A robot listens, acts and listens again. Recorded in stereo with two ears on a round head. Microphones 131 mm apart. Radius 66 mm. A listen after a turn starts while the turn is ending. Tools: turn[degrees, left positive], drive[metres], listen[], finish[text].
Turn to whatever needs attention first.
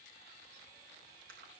Action: listen[]
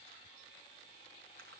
Action: listen[]
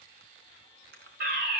Thought: The fire alarm: about 65° right or 115° right.
Action: turn[-65]
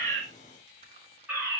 Thought: So it is at 10° right.
Action: turn[-10]
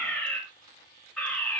Action: finish[Found it: a fire alarm, straight ahead.]